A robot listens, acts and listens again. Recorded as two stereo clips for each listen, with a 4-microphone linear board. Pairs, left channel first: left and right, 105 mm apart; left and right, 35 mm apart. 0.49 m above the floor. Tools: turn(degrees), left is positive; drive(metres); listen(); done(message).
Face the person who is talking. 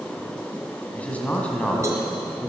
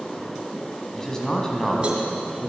turn(degrees=30)
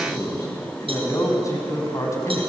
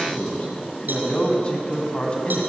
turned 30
turn(degrees=150)
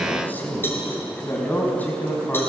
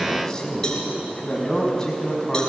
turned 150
turn(degrees=15)
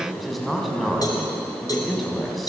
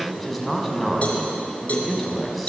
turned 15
done("Found it: a man speaking, straight ahead, over 4 m away.")